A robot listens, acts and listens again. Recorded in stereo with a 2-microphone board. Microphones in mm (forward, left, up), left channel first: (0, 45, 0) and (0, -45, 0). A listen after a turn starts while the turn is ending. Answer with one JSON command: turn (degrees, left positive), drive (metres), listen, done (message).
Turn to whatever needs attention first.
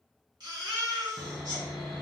{"turn": -55}
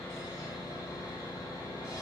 {"listen": true}
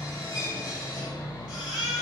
{"turn": -10}
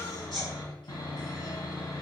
{"done": "Found it: a baby crying, straight ahead, 1 to 2 m away."}